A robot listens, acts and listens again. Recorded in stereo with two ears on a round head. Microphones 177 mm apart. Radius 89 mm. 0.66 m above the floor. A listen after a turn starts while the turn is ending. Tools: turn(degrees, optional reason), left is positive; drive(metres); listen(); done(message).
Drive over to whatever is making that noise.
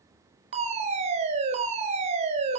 turn(degrees=-35, reason="The fire alarm: about 35° right or 145° right.")
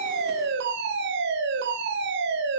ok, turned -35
turn(degrees=-105, reason="So it is at 105° right.")
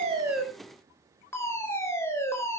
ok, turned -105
turn(degrees=15, reason="The fire alarm is now 15° left.")
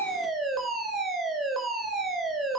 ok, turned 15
drive(metres=1.0)
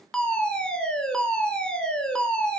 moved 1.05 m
drive(metres=1.0)
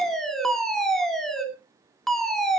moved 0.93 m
drive(metres=1.0)
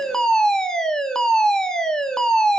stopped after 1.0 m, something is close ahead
done("Arrived at the fire alarm, straight ahead.")